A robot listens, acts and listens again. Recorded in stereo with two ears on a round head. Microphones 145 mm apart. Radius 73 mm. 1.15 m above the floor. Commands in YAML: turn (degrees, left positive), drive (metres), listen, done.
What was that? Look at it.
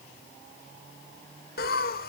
turn: 60
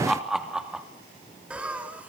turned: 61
turn: -10
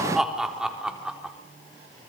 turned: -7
done: "Found it: laughter, straight ahead, over 4 m away."